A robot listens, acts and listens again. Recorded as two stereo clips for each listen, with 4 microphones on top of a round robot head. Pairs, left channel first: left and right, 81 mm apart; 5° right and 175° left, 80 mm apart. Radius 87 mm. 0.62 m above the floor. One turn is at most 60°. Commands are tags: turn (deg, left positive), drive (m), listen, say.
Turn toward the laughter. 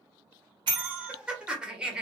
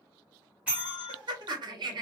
<turn deg="-60"/>
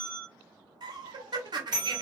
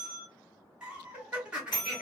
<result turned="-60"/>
<turn deg="-60"/>
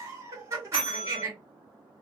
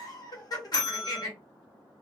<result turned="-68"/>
<turn deg="-40"/>
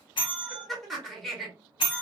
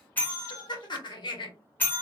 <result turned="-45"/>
<say>Found it: laughter, straight ahead, 1 to 2 m away.</say>